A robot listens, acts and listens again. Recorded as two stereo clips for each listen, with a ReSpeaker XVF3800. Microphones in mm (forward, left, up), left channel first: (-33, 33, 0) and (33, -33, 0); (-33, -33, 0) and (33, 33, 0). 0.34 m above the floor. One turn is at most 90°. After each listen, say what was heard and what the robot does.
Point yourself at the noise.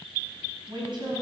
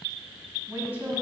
The woman speaking: 25° right. Turn 25° right.
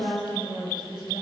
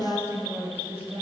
The woman speaking is now 20° right. Turn 20° right.
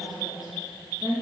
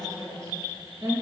The woman speaking is now 10° right. Turn 10° right.
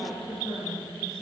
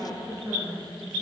Facing the woman speaking.